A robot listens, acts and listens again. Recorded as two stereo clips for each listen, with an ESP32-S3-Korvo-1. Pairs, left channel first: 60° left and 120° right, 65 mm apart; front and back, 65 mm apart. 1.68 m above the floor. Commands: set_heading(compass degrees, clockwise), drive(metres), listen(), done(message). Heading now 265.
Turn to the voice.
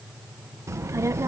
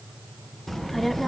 set_heading(350)
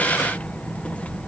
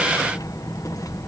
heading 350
done("Found it: a child speaking, straight ahead.")